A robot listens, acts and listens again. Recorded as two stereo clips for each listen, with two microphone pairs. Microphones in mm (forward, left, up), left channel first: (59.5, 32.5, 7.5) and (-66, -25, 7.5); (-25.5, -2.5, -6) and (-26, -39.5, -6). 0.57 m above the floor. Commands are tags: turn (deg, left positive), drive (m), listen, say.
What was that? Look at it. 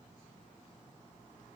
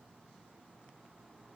<listen/>
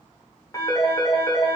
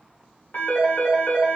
<turn deg="90"/>
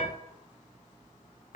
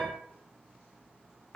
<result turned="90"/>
<turn deg="25"/>
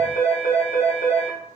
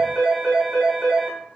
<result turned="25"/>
<say>Found it: a phone ringing, straight ahead.</say>